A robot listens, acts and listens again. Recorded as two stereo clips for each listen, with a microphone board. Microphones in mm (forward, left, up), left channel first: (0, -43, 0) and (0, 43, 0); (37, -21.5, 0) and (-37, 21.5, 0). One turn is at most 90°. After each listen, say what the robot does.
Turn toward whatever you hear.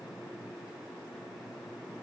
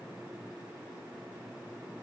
Keep listening.
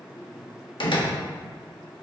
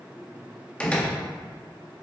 Turn 90° right.
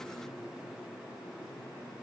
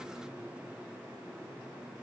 Turn 15° right.
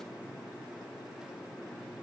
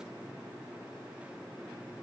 I heard a door slam from this way, but can't make it out now.